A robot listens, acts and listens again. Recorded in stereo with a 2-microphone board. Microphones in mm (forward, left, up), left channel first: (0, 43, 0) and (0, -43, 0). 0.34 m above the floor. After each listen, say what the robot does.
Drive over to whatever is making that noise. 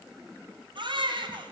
Turn 70° right.
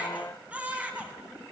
Turn 15° right.
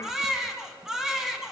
Drive 1.0 m forward.
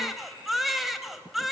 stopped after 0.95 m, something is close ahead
Arrived at the baby crying, straight ahead.